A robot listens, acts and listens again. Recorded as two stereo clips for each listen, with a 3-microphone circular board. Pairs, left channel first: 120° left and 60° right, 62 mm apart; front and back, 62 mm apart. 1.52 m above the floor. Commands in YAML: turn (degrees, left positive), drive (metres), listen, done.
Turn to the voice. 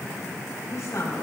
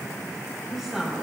turn: 95
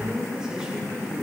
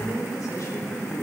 turn: 20
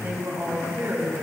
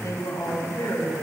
done: "Facing the woman speaking, over 4 m away."